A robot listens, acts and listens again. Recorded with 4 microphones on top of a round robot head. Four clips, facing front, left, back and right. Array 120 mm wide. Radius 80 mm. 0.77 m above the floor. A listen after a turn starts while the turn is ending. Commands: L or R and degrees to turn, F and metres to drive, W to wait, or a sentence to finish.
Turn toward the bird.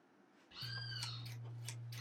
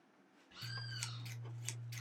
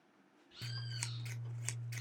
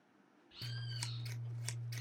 L45
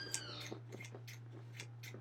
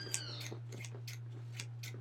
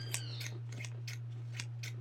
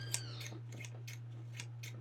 W
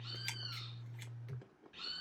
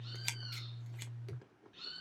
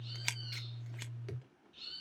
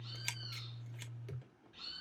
Found it: a bird, straight ahead.